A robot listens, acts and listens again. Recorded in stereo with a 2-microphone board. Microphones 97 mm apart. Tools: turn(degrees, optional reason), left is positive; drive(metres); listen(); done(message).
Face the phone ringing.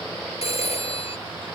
turn(degrees=90)
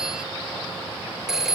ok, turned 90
done("Facing the phone ringing.")